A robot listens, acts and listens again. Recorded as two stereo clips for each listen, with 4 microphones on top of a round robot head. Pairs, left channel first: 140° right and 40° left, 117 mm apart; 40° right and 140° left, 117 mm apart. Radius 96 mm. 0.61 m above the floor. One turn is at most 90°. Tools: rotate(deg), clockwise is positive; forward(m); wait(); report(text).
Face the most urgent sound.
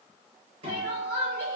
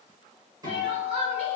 rotate(-90)
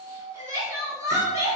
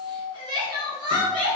rotate(-90)
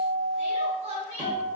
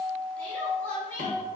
rotate(-35)
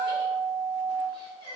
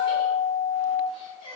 report("Facing the crying.")